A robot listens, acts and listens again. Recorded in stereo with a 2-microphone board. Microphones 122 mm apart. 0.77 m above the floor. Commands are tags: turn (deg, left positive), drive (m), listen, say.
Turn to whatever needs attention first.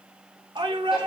<turn deg="-40"/>
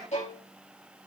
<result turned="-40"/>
<listen/>
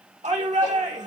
<turn deg="-95"/>
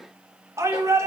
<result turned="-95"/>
<turn deg="-25"/>
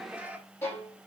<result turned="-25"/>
<turn deg="-10"/>
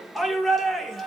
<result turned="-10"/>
<say>Found it: a shout, straight ahead.</say>